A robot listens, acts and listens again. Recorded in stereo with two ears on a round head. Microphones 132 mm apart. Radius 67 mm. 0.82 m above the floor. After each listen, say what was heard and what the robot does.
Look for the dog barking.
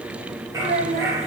The dog barking: about 20° right or 160° right. Turn 20° right.
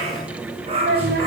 So it is at 135° right. Turn 135° right.
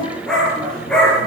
Facing the dog barking, over 4 m away.